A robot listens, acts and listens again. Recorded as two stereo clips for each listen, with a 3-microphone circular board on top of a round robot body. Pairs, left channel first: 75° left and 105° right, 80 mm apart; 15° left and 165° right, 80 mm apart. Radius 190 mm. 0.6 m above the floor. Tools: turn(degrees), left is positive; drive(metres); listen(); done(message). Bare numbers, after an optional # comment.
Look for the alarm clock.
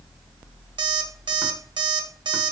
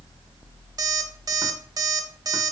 # The alarm clock: 125° right.
turn(-125)
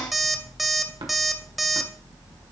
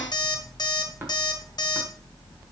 # The alarm clock is now 15° right.
turn(-15)
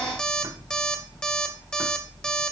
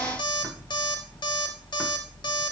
done("Found it: an alarm clock, straight ahead.")